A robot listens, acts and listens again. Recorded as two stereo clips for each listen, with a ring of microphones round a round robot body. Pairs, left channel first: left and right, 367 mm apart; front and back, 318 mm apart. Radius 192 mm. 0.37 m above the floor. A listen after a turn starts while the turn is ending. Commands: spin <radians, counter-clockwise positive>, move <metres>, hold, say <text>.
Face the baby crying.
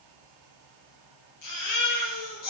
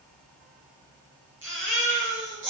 spin 2.27
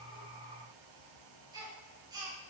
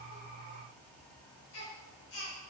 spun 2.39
spin -0.17
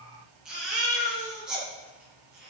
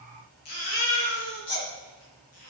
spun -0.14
say Found it: a baby crying, straight ahead.